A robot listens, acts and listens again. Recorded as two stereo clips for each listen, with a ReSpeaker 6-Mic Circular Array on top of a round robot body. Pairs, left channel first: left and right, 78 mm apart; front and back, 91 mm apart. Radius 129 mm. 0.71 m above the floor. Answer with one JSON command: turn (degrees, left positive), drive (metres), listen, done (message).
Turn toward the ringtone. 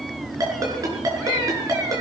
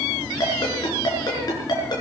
{"turn": -45}
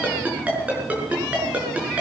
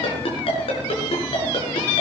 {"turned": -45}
{"turn": -20}
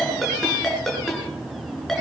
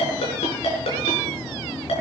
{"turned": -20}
{"done": "Found it: a ringtone, straight ahead, over 4 m away."}